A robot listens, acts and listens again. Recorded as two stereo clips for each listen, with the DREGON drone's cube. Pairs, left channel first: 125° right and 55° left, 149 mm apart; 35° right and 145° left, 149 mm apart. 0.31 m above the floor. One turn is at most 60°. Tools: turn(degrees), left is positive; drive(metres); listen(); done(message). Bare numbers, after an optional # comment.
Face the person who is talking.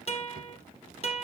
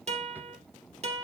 listen()
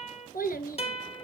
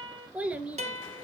# The child speaking: 135° right.
turn(-60)
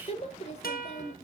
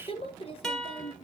# The child speaking is now 85° right.
turn(-60)
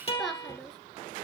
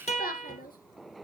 # The child speaking is now 35° right.
turn(-35)
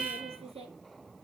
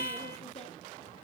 # The child speaking is now 10° left.
turn(10)
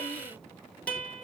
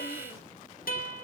listen()
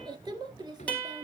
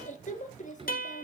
done("Found it: a child speaking, straight ahead, 2 to 4 m away.")